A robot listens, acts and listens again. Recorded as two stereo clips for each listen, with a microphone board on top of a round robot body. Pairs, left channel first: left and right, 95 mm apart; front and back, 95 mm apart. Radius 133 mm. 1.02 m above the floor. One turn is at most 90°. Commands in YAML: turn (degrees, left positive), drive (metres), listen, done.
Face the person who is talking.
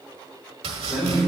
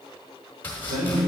turn: -90
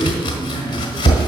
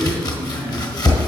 turn: -65
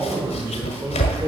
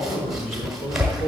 turn: -25
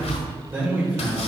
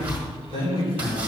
turn: -20
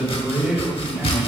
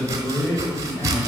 done: "Facing the man speaking."